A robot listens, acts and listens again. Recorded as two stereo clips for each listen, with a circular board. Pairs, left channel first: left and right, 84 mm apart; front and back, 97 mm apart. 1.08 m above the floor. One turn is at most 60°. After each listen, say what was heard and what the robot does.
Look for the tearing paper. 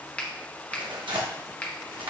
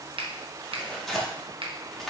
The tearing paper: 85° right. Turn 60° right.
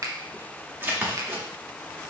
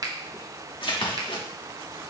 The tearing paper is now 25° right. Turn 25° right.
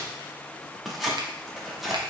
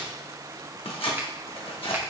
Facing the tearing paper, 1 to 2 m away.